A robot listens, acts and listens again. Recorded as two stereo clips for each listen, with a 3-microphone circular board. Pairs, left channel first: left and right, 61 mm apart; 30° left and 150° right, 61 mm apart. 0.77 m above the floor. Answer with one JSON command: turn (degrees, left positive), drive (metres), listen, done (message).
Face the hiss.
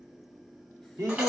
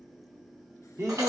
{"listen": true}
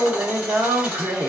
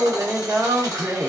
{"listen": true}
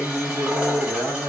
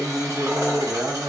{"done": "I can't make out a hiss to turn to."}